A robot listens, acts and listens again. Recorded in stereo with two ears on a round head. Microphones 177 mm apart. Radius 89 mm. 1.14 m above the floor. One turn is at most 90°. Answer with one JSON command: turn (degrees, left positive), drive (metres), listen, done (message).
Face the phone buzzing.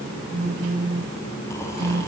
{"turn": -35}
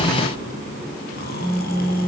{"done": "Found it: a phone buzzing, straight ahead, 1 to 2 m away."}